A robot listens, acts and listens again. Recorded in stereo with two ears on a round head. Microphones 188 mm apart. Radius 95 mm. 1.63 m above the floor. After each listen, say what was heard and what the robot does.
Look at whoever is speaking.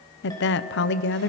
The woman speaking: about 55° left or 125° left. Turn 55° left.
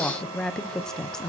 Facing the woman speaking.